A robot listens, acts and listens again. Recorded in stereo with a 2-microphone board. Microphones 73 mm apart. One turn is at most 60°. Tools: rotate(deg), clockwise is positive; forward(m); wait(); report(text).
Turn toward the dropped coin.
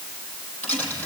rotate(-20)
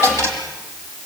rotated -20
rotate(-60)
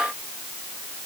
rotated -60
rotate(-60)
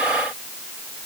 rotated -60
rotate(-20)
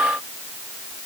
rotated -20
report("I heard a dropped coin from this way, but can't make it out now.")